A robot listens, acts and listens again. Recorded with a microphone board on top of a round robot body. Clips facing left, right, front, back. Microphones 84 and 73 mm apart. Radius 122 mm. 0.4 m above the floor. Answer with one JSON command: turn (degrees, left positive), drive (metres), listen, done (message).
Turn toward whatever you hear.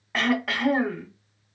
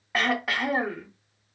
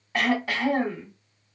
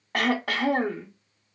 {"turn": -175}
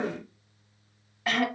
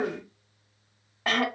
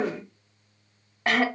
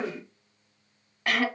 {"turn": -55}
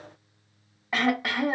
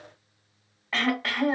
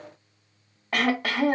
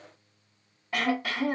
{"turn": 15}
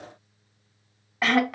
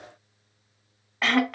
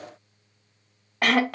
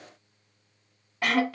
{"done": "Facing the throat clearing, under 1 m away."}